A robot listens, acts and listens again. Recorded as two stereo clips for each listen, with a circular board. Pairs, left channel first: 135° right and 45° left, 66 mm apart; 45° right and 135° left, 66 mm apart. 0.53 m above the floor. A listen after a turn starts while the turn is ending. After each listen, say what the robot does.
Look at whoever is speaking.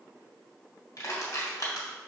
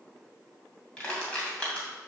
Keep listening.
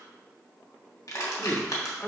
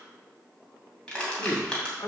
Turn 65° right.
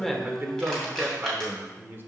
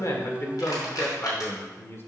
Facing the man speaking, 1 to 2 m away.